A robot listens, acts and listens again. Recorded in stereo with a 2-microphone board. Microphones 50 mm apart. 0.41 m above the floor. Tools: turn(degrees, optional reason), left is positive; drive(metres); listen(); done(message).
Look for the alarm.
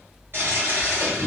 listen()
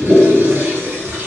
listen()
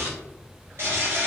done("I can't make out an alarm to turn to.")